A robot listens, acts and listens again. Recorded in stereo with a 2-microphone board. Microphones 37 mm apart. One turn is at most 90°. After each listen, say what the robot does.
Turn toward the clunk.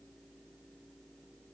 Keep listening.
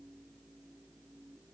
Keep listening.
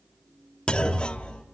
Turn 25° left.
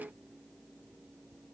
Keep listening.
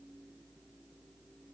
I heard a clunk, but can't make it out now. It was about straight ahead or 130° left.